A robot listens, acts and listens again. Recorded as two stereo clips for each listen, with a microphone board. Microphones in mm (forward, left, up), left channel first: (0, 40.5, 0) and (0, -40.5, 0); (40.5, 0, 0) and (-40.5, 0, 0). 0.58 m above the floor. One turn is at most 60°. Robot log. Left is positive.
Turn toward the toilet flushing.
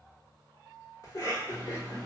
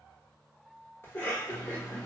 cmd idle
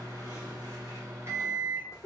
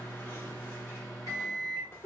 cmd idle
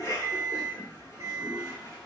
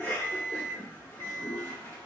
note: The toilet flushing: 10° left.
cmd yaw +10
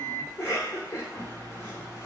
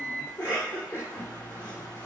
cmd idle
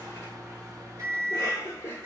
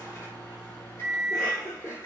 cmd idle
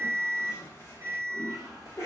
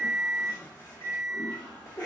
end: Facing the toilet flushing.